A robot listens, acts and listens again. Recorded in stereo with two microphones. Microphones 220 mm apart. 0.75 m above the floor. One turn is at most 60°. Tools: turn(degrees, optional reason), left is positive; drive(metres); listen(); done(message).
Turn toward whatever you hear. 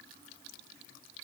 listen()
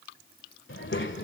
turn(degrees=55, reason="The child speaking: about 55° left or 125° left.")
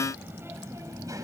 turn(degrees=-15, reason="So it is at 15° right.")
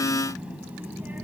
turn(degrees=-10, reason="The child speaking is now 10° right.")
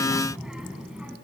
done("Facing the child speaking.")